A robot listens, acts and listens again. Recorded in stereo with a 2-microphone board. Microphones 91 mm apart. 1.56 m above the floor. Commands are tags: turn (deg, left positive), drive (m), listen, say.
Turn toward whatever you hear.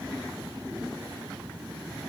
<listen/>
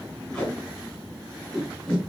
<turn deg="30"/>
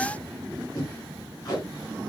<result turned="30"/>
<turn deg="140"/>
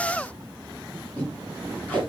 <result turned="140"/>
<turn deg="15"/>
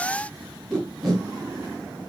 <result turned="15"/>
<say>Found it: tape being pulled, straight ahead, over 4 m away.</say>